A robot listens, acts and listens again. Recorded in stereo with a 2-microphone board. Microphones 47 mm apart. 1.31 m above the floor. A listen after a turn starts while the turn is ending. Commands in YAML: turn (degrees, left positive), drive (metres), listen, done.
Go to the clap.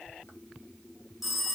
listen: true
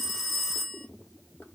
listen: true
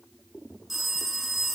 done: "I can't make out a clap to turn to."